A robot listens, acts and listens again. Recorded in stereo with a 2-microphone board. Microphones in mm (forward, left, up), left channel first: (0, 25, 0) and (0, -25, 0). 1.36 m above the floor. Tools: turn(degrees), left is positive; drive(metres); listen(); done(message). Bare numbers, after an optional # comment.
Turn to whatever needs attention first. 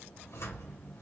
listen()
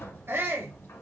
# The shout: about 55° right or 125° right.
turn(-55)
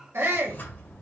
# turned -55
# So it is at 65° right.
turn(-65)
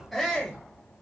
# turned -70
done("Found it: a shout, straight ahead.")